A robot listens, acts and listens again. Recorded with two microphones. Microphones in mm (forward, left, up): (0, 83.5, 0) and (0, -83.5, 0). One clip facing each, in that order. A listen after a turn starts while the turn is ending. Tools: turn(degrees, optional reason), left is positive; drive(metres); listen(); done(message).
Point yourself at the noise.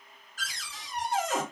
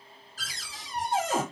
turn(degrees=-35, reason="The cupboard door: about 35° right or 145° right.")
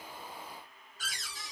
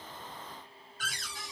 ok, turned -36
turn(degrees=-110, reason="So it is at 110° right.")
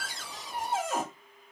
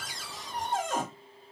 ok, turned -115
done("Facing the cupboard door, under 1 m away.")